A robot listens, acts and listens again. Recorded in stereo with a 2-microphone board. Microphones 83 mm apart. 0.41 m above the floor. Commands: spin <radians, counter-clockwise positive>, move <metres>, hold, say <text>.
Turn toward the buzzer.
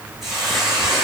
hold
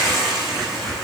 hold
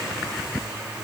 say I can't make out a buzzer, only a hiss.